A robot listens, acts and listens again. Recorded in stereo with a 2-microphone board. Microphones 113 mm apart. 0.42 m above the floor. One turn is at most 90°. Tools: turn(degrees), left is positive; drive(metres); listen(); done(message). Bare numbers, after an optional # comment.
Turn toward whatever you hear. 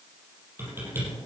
# The typing on a keyboard: about 20° right or 160° right.
turn(-20)
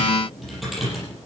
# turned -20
done("Found it: typing on a keyboard, straight ahead.")